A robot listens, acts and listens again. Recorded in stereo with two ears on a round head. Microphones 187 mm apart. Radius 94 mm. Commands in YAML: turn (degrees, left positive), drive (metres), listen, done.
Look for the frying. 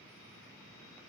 listen: true
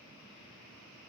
listen: true
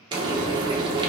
turn: -20
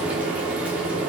done: "Facing the frying."